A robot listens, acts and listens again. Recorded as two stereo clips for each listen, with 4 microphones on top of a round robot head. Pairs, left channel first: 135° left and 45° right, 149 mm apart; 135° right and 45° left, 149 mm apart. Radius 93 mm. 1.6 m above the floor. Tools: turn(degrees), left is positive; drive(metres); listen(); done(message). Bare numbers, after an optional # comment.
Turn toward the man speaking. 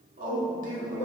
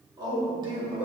# The man speaking: 10° right.
turn(-10)
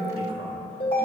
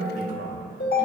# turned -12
# The man speaking is now 10° left.
turn(10)
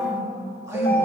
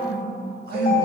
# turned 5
# The man speaking is now 25° left.
turn(25)
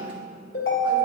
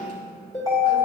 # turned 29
listen()
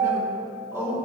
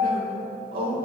# The man speaking is now 30° left.
turn(30)
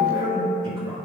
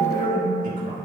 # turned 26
# The man speaking is now 10° left.
turn(10)
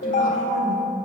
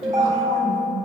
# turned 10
listen()
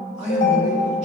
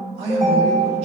done("Found it: a man speaking, straight ahead, 2 to 4 m away.")